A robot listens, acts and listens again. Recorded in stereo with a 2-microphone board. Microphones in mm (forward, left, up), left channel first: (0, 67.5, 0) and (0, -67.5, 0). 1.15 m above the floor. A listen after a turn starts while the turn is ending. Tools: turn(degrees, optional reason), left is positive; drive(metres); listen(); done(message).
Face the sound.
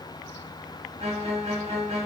turn(degrees=-55, reason="The violin: about 55° right or 125° right.")
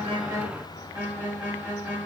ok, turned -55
turn(degrees=-15, reason="So it is at 15° right.")
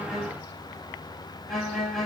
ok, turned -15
done("Found it: a violin, straight ahead.")